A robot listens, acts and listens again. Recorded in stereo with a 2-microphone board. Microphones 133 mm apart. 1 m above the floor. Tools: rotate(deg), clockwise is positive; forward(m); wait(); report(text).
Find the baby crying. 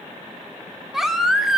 rotate(30)
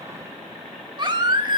rotate(145)
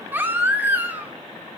rotate(15)
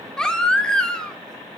report("Facing the baby crying, 1 to 2 m away.")